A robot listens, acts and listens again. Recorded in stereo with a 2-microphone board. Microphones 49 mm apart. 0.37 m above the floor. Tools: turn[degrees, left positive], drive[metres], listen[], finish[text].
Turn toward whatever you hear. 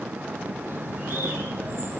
Thought: The bird: about 50° right or 130° right.
Action: turn[-50]
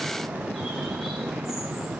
Action: finish[Found it: a bird, straight ahead.]